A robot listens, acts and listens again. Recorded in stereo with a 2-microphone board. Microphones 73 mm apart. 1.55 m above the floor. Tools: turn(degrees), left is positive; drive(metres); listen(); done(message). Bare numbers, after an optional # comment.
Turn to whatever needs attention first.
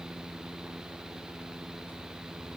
listen()
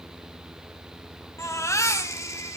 # The baby crying: about 45° left or 135° left.
turn(45)
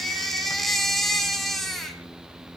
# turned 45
done("Found it: a baby crying, straight ahead.")